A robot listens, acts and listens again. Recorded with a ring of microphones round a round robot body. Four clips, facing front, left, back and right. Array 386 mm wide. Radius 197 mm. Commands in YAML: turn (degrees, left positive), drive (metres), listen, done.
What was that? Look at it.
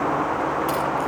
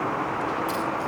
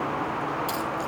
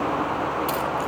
turn: -95
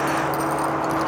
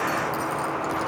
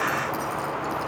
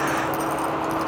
turn: -20
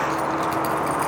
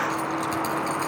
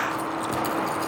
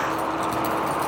turn: 10
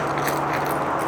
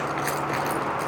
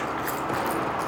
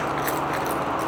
turn: 10
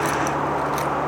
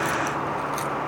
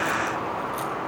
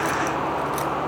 done: "Found it: keys jangling, straight ahead."